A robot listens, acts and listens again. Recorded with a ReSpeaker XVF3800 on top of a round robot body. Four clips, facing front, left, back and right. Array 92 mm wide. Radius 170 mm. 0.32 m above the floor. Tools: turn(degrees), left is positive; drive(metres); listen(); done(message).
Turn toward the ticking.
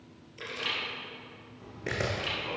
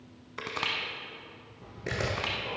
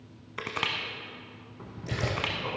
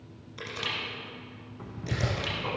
turn(degrees=-130)
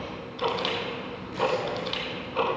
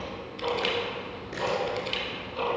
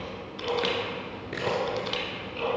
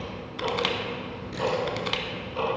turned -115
turn(degrees=-10)
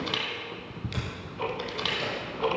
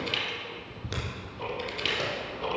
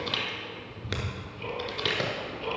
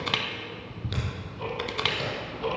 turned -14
done("Found it: ticking, straight ahead, 1 to 2 m away.")